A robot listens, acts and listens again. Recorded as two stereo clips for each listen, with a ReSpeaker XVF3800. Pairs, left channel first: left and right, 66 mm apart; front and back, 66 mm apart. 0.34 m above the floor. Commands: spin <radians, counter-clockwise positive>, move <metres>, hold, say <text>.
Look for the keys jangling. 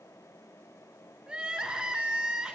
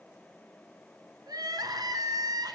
hold
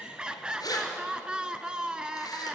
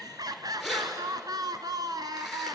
spin 1.57
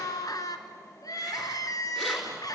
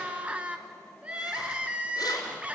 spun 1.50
hold
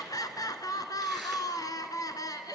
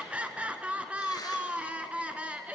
hold
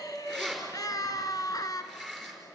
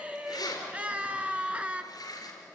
say Found it: keys jangling, straight ahead, over 4 m away.